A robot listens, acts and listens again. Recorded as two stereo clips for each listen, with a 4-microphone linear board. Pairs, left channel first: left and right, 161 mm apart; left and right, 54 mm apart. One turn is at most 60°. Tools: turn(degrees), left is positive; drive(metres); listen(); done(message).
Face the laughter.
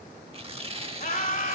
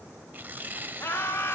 turn(degrees=55)
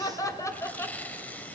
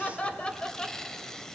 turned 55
turn(degrees=15)
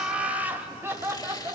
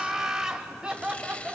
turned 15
turn(degrees=-20)
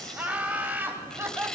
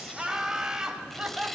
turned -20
turn(degrees=-15)
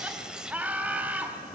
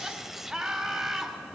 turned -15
turn(degrees=-10)
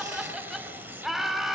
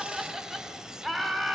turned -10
done("Facing the laughter, 2 to 4 m away.")